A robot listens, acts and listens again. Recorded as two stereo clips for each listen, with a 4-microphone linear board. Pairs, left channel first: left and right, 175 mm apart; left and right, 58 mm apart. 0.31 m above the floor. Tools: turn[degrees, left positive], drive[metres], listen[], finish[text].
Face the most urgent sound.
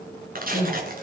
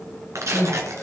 Thought: The crying: about 25° left or 155° left.
Action: turn[25]
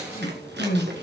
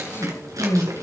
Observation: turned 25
Thought: So it is at 130° left.
Action: turn[130]
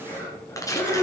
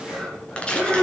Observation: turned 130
Thought: The crying is now 15° left.
Action: turn[15]
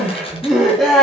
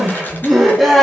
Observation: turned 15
Action: finish[Facing the crying.]